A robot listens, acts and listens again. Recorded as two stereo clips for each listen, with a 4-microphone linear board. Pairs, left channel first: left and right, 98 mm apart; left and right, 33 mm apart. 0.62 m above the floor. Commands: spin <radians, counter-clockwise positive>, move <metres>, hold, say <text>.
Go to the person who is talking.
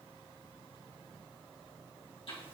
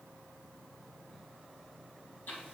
hold
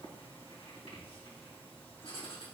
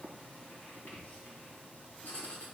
hold
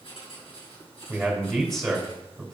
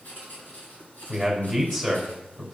spin 0.52
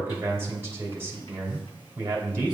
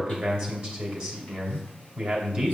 spin -0.52
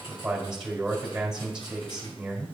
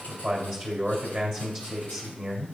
spin -0.17
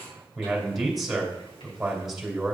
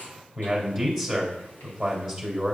move 1.0
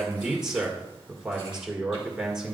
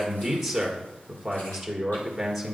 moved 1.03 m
move 1.0
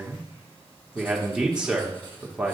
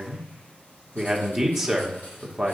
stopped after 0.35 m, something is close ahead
spin -0.17
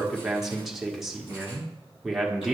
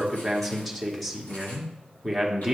say I am next to the man speaking.